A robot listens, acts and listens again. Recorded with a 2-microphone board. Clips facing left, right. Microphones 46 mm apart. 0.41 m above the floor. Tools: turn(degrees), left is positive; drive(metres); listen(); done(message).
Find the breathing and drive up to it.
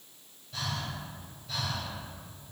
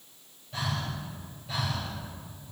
turn(degrees=-20)
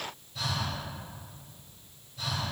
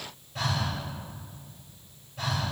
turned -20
turn(degrees=-135)
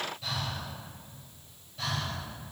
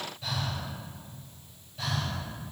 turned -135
turn(degrees=-10)
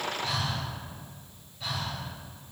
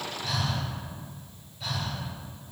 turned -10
drive(metres=1.0)
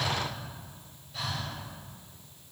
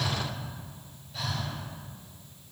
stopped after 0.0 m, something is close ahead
done("Blocked. The breathing is further on, straight ahead.")